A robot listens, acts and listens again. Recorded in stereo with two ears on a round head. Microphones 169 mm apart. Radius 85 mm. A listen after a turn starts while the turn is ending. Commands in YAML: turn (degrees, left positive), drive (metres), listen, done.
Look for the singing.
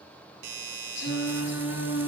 turn: 70
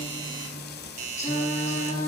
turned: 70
turn: 40
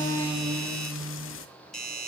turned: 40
done: "Facing the singing."